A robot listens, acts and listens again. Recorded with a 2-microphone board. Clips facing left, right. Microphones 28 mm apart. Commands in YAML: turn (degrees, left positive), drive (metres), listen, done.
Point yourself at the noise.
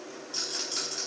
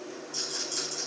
turn: 60
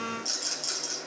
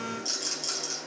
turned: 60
done: "Found it: a rattle, straight ahead, over 4 m away."